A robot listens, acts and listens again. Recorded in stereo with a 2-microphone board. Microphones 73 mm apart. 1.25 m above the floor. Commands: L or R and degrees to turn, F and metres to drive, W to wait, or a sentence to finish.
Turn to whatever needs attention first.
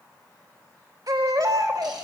R65
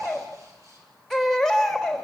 Found it: a baby crying, straight ahead, 2 to 4 m away.